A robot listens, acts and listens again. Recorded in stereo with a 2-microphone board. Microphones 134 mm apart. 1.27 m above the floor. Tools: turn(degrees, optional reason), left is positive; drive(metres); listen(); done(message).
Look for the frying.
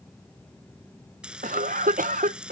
turn(degrees=-30)
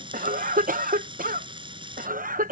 turn(degrees=-145, reason="So it is at 145° right.")
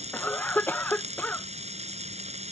turn(degrees=-55, reason="The frying is now 55° right.")
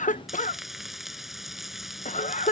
done("Facing the frying.")